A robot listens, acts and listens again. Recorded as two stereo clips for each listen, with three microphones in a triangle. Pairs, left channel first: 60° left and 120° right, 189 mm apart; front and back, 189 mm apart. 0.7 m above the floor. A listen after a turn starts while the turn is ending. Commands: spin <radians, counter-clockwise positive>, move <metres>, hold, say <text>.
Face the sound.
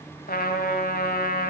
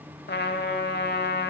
spin 0.44
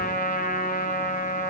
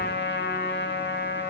spin 0.35
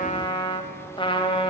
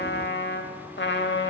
say Facing the trumpet.